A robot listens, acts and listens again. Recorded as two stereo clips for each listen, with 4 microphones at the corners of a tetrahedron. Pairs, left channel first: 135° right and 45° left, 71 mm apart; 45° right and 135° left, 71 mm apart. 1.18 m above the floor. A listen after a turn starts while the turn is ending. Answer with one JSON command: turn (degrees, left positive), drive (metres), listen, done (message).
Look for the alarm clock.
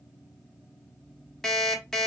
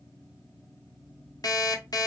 {"turn": -55}
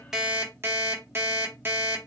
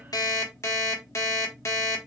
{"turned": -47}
{"done": "Found it: an alarm clock, straight ahead, 1 to 2 m away."}